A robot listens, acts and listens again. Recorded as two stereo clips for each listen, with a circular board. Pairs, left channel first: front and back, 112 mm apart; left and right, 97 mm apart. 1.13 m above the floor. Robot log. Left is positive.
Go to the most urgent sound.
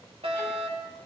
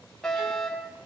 note: The fire alarm: 175° left.
cmd yaw +175
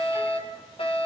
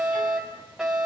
cmd fwd 1.0
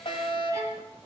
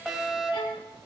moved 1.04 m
cmd fwd 1.0
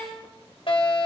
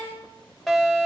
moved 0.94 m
cmd fwd 1.0
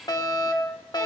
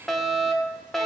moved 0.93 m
cmd fwd 1.0
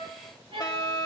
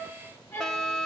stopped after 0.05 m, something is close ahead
note: The fire alarm is now 10° left.
cmd yaw +10
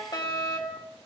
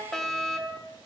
end: I am next to the fire alarm.